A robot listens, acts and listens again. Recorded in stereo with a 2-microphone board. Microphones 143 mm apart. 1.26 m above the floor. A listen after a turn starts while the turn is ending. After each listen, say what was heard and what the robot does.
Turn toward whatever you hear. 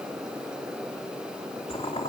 The boiling: about 45° left or 135° left. Turn 45° left.
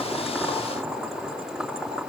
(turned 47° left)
Found it: boiling, straight ahead.